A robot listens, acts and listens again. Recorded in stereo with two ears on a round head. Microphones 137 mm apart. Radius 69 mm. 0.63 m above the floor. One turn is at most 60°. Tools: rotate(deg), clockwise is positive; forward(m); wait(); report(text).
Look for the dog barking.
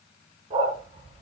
rotate(40)
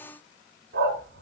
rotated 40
rotate(60)
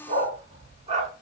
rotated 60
rotate(35)
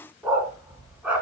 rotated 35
rotate(10)
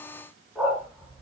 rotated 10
report("Found it: a dog barking, straight ahead.")